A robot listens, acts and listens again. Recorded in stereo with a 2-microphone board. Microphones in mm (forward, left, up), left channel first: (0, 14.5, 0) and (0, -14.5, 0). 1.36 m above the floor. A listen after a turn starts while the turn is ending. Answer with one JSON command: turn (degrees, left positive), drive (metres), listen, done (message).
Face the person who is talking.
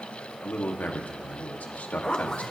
{"turn": 90}
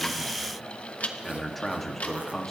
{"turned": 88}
{"done": "Facing the man speaking, 2 to 4 m away."}